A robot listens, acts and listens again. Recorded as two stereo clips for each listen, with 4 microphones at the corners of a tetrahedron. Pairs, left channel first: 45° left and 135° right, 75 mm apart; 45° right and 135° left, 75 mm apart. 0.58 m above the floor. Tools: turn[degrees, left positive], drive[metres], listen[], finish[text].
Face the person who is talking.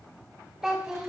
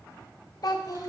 Thought: The child speaking: 50° right.
Action: turn[-50]
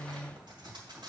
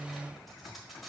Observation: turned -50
Action: listen[]
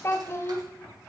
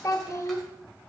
Action: finish[Found it: a child speaking, straight ahead, 1 to 2 m away.]